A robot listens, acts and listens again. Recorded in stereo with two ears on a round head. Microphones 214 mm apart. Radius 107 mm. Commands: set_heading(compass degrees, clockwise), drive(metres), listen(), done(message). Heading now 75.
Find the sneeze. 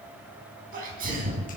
set_heading(115)
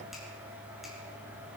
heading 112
listen()
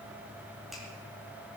done("I heard a sneeze, but can't make it out now. It was about straight ahead or 105° right.")